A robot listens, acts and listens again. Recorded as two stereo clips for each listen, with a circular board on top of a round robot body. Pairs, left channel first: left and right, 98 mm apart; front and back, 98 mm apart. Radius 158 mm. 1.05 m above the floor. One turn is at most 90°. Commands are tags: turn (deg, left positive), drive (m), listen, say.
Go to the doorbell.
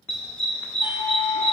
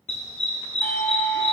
<turn deg="65"/>
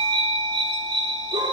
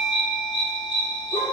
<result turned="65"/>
<turn deg="10"/>
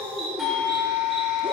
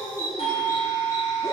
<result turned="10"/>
<drive m="1.0"/>
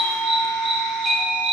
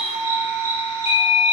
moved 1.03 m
<drive m="1.0"/>
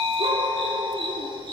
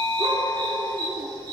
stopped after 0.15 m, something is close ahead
<say>Arrived at the doorbell, straight ahead.</say>